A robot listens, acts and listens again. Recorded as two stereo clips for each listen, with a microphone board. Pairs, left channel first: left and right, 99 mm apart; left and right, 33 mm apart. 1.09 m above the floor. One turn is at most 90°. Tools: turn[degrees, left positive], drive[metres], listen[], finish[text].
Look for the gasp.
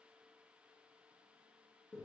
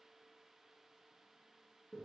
Action: listen[]
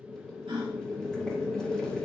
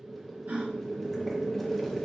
Thought: The gasp: about 70° right or 110° right.
Action: turn[-70]
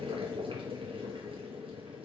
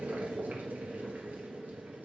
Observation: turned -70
Action: listen[]
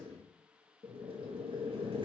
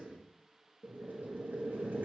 Action: finish[I heard a gasp, but can't make it out now. It was about straight ahead or 40° right.]